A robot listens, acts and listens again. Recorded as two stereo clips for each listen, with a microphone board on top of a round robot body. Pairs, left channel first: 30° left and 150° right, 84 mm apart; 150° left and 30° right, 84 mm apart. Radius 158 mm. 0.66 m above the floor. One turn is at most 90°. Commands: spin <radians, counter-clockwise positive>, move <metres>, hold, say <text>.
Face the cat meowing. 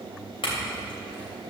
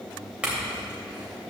hold
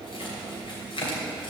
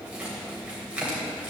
hold
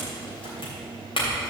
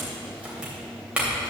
say I can't make out a cat meowing, only a clink.